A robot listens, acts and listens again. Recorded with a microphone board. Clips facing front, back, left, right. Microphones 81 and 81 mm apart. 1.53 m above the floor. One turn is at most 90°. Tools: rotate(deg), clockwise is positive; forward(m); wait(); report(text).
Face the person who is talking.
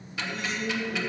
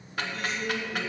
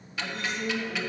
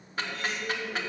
rotate(-90)
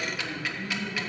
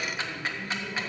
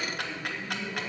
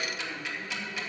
rotate(-20)
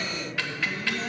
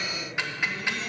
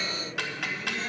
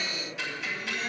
report("Found it: a woman speaking, straight ahead, 2 to 4 m away.")